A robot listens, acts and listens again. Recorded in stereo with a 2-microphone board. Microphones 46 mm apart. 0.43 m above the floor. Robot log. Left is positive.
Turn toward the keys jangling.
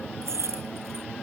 cmd yaw -90
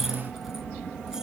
cmd idle
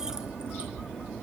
cmd idle
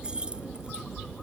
note: The keys jangling is now 20° right.
cmd yaw -20
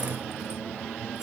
cmd idle
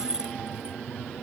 note: The keys jangling is now 15° right.
cmd yaw -15
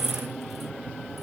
end: Found it: keys jangling, straight ahead.